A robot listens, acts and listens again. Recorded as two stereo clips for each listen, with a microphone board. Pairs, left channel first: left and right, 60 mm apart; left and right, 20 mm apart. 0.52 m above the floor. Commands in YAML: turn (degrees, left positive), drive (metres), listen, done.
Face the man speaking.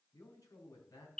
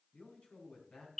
turn: 70
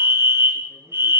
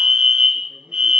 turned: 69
listen: true
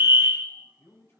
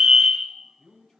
turn: 40
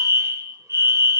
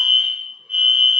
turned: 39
listen: true
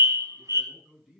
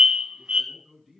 done: "Found it: a man speaking, straight ahead."